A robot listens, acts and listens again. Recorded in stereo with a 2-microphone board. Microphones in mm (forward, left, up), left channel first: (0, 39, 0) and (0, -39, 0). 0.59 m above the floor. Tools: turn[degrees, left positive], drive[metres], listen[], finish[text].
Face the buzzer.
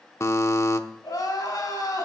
Thought: The buzzer: about 40° left or 140° left.
Action: turn[40]
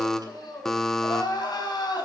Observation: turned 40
Action: finish[Found it: a buzzer, straight ahead, under 1 m away.]